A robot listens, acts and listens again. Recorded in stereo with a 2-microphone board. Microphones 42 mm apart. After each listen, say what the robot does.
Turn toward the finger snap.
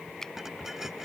Turn 30° left.
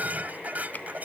Keep listening.
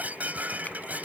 Keep listening.
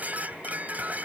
I heard a finger snap, but can't make it out now. It was about 20° right or 140° left.